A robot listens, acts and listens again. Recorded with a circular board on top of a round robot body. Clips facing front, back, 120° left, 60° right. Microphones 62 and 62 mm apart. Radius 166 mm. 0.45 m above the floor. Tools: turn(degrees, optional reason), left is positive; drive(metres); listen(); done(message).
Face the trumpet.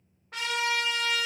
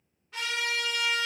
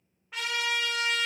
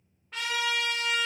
turn(degrees=35, reason="The trumpet: 35° left.")
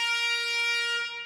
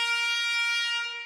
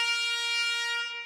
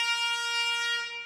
turn(degrees=15, reason="The trumpet is now 15° left.")
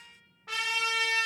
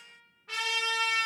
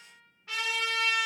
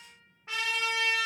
done("Found it: a trumpet, straight ahead.")